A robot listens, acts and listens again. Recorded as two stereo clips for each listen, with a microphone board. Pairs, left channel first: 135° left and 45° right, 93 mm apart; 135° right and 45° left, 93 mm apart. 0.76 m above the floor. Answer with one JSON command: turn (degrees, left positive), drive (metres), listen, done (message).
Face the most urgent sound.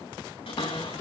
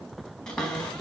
{"listen": true}
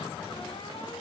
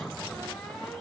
{"listen": true}
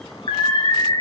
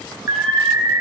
{"turn": 105}
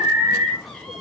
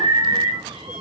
{"turn": 15}
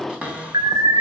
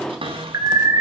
{"done": "Found it: an alarm, straight ahead, 1 to 2 m away."}